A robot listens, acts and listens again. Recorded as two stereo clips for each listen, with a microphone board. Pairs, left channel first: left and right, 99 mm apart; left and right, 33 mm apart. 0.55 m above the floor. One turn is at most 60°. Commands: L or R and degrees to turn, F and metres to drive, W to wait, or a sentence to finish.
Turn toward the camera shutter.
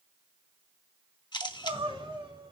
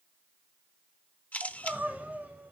L50
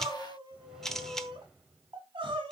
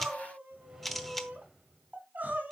Found it: a camera shutter, straight ahead, under 1 m away.